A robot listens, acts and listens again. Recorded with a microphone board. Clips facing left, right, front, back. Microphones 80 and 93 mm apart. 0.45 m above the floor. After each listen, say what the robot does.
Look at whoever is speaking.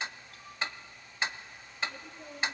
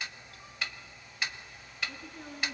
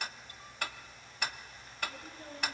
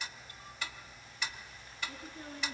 Turn 125° right.
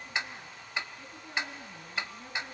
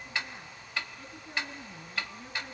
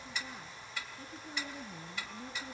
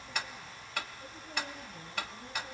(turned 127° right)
Keep listening.
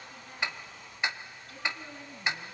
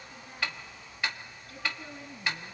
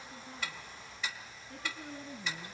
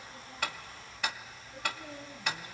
Facing the woman speaking, over 4 m away.